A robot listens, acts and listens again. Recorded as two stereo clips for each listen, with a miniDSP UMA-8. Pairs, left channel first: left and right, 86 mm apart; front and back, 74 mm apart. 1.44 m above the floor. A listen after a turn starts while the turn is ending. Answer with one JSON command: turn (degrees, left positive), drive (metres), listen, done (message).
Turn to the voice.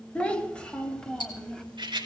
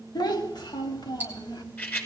{"done": "Facing the child speaking, 2 to 4 m away."}